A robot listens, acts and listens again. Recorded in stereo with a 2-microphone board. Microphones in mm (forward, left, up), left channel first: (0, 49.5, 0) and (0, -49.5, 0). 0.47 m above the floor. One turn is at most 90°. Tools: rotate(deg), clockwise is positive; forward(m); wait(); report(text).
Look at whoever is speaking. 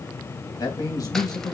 rotate(-40)
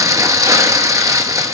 wait()
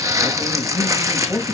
report("Facing the man speaking, 2 to 4 m away.")